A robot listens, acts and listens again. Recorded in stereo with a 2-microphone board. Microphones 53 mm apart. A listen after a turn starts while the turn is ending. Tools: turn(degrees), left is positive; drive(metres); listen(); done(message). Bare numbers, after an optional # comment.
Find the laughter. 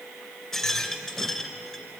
listen()
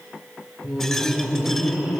# The laughter: about 20° right or 160° right.
turn(-20)
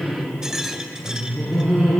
turn(-30)
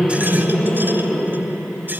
# So it is at 15° left.
turn(15)
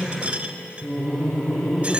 done("Facing the laughter, over 4 m away.")